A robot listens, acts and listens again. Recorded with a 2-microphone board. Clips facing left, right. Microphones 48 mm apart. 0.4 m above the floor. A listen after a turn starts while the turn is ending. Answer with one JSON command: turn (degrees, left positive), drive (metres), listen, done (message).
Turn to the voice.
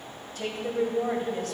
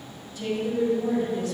{"turn": 60}
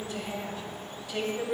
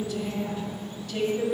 {"turn": 15}
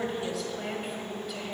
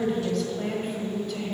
{"done": "Found it: a woman speaking, straight ahead, 1 to 2 m away."}